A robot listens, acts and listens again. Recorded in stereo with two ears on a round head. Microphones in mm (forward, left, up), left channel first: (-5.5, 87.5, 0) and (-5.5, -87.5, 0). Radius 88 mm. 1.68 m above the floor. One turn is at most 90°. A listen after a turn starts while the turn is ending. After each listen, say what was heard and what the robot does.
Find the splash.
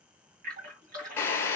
The splash: about 50° right or 130° right. Turn 50° right.
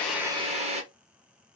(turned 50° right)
Keep listening.
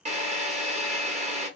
I heard a splash, but can't make it out now. It was about straight ahead or 80° right.